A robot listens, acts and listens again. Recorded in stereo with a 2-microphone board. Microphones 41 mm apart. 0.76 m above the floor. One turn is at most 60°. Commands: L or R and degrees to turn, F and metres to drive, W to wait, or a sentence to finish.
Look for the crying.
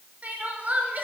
R35
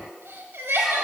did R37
R60
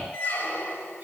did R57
R50
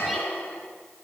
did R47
W
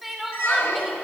Found it: crying, straight ahead, 1 to 2 m away.